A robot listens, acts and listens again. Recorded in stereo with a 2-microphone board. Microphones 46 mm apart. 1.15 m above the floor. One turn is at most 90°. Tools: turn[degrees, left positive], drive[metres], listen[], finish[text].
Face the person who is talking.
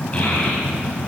Thought: The child speaking: about 25° left or 155° left.
Action: turn[25]
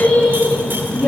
Action: finish[Facing the child speaking, over 4 m away.]